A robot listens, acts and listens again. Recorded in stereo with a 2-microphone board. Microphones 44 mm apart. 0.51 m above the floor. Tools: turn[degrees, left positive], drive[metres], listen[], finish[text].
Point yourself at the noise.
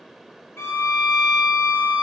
Thought: The violin: about 70° left or 110° left.
Action: turn[70]
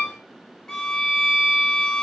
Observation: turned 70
Thought: So it is at 15° left.
Action: turn[15]
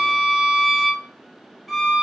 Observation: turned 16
Action: finish[Found it: a violin, straight ahead.]